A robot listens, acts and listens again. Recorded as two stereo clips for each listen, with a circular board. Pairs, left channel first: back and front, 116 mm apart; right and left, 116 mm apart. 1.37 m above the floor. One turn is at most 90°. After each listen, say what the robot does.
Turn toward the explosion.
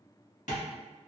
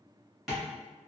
Keep listening.
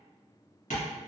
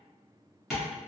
Keep listening.
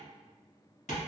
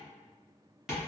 I can't make out an explosion to turn to.